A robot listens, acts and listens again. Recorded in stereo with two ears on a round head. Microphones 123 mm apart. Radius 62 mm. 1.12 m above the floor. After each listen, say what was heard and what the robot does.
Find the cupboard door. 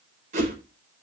Keep listening.
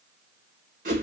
Keep listening.
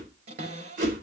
The cupboard door: about 45° right or 135° right. Turn 45° right.
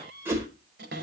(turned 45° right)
So it is at 90° right. Turn 90° right.
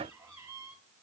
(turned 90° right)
The cupboard door is now 20° right. Turn 20° right.
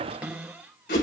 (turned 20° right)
The cupboard door is now 10° right. Turn 10° right.
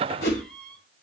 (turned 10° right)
Found it: a cupboard door, straight ahead, over 4 m away.